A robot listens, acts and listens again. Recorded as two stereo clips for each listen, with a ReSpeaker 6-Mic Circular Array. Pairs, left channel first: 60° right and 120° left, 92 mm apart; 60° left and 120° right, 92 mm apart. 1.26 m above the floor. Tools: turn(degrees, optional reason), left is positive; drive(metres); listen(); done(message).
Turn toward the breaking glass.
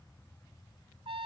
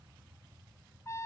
listen()
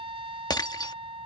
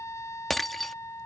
turn(degrees=-25, reason="The breaking glass: 25° right.")
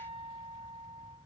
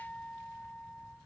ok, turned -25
done("Facing where the breaking glass came from. I can't hear it now.")